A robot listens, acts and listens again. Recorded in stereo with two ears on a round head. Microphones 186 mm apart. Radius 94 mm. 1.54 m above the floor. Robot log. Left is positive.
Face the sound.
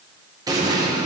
note: The explosion: about 20° right or 160° right.
cmd yaw -20
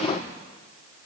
cmd idle
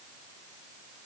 end: I heard an explosion, but can't make it out now. It was about straight ahead or 140° right.